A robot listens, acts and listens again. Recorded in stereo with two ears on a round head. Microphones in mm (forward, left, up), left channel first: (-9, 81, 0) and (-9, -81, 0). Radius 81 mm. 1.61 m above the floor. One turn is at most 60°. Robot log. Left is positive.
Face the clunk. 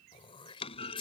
note: The clunk: about 35° left or 145° left.
cmd yaw +35
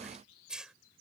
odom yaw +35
cmd idle
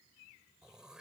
end: I heard a clunk, but can't make it out now. It was about straight ahead or 110° left.